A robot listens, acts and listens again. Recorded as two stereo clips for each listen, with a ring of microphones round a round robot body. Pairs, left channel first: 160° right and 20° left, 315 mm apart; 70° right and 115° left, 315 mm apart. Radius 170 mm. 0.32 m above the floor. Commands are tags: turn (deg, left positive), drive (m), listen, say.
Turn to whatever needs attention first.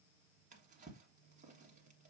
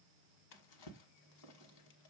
<listen/>
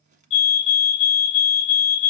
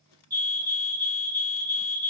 <turn deg="-165"/>
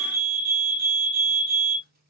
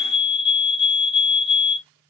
<turn deg="-35"/>
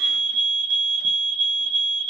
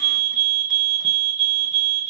<turn deg="25"/>
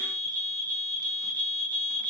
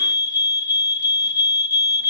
<turn deg="-10"/>
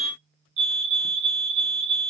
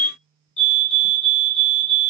<say>Found it: a fire alarm, straight ahead, 2 to 4 m away.</say>